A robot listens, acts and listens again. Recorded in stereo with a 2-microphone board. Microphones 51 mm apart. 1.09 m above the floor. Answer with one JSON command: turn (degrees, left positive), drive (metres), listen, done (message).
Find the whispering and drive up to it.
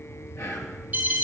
{"turn": 75}
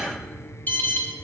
{"listen": true}
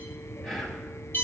{"turn": 10}
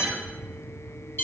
{"listen": true}
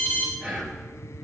{"drive": 1.0}
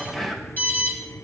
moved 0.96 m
{"turn": 10}
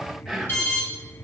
{"drive": 1.0}
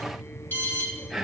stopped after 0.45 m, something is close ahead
{"done": "I am next to the whispering."}